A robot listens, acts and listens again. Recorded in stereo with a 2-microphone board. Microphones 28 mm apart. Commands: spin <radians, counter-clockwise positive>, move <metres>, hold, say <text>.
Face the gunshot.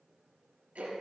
hold
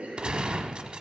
spin -0.70
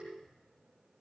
hold
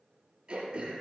say I heard a gunshot, but can't make it out now. It was about straight ahead or 100° right.